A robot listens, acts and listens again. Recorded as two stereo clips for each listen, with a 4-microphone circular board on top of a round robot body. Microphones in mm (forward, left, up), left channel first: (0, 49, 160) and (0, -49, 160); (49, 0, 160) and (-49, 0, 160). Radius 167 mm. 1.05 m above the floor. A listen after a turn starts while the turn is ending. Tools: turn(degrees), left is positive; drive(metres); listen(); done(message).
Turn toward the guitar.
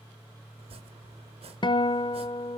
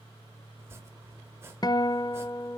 turn(degrees=50)
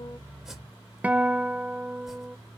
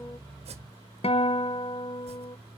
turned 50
turn(degrees=-15)
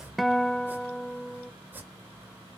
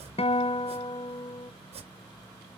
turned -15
done("Found it: a guitar, straight ahead, under 1 m away.")